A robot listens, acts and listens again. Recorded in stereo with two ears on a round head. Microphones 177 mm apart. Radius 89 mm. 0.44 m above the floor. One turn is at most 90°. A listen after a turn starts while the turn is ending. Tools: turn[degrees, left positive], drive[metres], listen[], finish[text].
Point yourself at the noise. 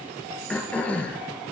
Action: turn[30]
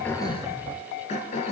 Thought: So it is at 145° left.
Action: turn[90]
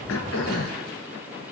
Thought: The throat clearing is now 55° left.
Action: turn[55]
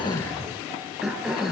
Action: finish[Facing the throat clearing, 1 to 2 m away.]